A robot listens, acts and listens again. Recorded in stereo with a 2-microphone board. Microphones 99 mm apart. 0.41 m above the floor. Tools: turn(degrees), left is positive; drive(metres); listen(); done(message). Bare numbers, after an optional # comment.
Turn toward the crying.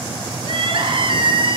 # The crying: about 60° right or 120° right.
turn(-60)
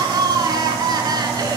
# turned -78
# So it is at 40° right.
turn(-40)
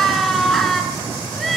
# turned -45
done("Facing the crying, 1 to 2 m away.")